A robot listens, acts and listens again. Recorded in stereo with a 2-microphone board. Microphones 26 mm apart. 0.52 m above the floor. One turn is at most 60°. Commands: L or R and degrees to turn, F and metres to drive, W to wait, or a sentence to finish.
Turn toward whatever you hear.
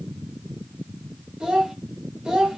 R30
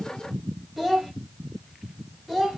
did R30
Found it: a child speaking, straight ahead.